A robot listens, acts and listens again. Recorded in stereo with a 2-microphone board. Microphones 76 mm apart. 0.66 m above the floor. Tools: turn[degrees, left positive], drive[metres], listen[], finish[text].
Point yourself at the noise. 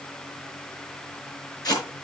Thought: The tape being pulled: about 60° left or 120° left.
Action: turn[60]
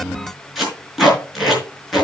Action: finish[Found it: tape being pulled, straight ahead, over 4 m away.]